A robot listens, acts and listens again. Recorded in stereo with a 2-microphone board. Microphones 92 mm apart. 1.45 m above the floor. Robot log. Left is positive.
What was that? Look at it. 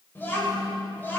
note: The child speaking: about 25° left or 155° left.
cmd yaw +25
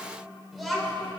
end: Facing the child speaking, 2 to 4 m away.